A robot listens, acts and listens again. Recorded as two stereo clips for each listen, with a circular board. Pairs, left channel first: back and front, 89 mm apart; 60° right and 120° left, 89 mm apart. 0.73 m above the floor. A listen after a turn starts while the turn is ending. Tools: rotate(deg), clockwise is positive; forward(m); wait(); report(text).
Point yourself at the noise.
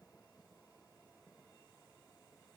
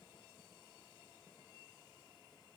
wait()
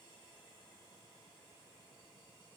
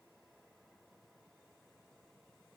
wait()
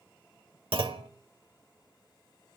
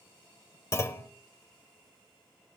report("Facing the clunk, 1 to 2 m away.")